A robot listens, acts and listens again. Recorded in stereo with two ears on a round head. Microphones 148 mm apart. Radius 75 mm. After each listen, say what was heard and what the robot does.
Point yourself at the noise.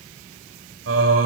Turn 90° right.
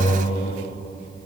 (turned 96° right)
So it is at 25° left. Turn 25° left.
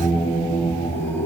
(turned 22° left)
The singing is now 15° left. Turn 15° left.
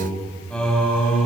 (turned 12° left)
Found it: singing, straight ahead.